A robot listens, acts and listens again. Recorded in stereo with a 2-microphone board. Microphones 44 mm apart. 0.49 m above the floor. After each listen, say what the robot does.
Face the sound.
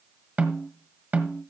Turn 40° right.
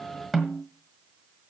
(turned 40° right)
Facing the snare drum.